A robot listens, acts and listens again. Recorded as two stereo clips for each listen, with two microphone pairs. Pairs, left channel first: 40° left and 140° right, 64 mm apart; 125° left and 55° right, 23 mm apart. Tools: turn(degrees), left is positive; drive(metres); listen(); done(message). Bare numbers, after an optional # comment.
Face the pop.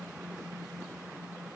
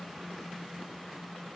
listen()
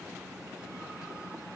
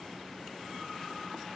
listen()
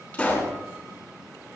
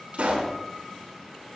# The pop: 30° right.
turn(-30)
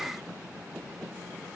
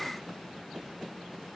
done("Facing where the pop came from. I can't hear it now.")